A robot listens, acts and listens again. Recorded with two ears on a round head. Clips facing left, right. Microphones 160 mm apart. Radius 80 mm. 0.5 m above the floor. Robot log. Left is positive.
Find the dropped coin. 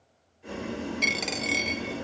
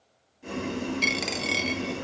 cmd yaw -30
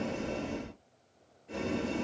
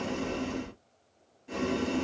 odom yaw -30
cmd idle
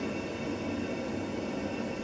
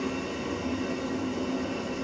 end: I heard a dropped coin, but can't make it out now. It was about 25° left or 145° right.